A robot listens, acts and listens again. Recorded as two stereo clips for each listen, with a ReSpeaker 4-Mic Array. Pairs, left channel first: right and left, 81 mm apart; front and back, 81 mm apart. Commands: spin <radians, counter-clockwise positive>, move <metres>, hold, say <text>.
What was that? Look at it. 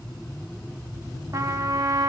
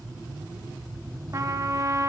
spin 2.36
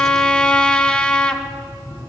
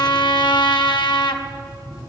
spin -0.26
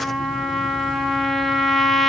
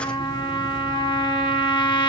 say Found it: a trumpet, straight ahead.